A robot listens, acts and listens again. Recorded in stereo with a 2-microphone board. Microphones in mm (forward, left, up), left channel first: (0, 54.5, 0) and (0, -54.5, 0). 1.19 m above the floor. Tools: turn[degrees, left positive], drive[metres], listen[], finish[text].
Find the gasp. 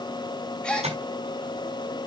Action: turn[30]
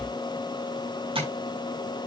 Action: listen[]
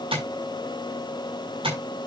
Action: finish[I heard a gasp, but can't make it out now. It was about 20° right or 140° left.]